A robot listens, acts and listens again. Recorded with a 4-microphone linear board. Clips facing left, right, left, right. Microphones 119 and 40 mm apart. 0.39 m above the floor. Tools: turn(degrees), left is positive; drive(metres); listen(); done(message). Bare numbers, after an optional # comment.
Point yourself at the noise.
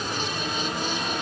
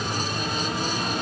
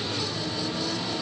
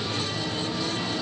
listen()
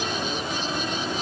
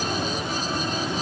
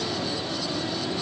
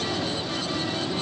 listen()
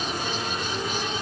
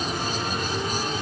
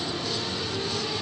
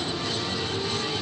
done("I can't make out anything to turn to.")